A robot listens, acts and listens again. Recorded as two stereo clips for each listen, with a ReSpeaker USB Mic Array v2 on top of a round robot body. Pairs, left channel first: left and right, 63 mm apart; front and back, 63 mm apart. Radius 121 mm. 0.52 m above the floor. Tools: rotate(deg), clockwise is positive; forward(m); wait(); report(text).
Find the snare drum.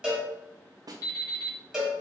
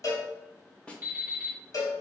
rotate(75)
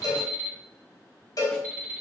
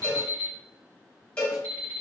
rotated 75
wait()
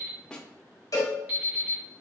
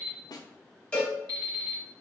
rotate(-10)
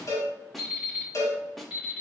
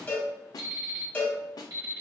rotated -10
report("Facing the snare drum, under 1 m away.")